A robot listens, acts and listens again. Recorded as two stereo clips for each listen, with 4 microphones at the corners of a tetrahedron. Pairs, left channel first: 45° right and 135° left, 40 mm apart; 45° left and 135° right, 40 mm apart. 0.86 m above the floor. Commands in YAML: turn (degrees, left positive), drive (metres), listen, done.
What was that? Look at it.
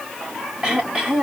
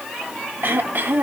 turn: -155
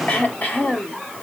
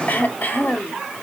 turn: 10
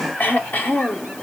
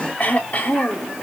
done: "Facing the throat clearing."